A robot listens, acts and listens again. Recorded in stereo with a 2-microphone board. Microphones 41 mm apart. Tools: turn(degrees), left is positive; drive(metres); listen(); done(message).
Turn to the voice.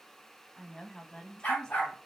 turn(degrees=20)
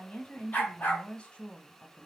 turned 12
turn(degrees=150)
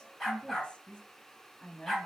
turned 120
turn(degrees=30)
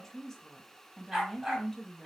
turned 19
turn(degrees=10)
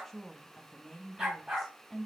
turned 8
done("Found it: a woman speaking, straight ahead.")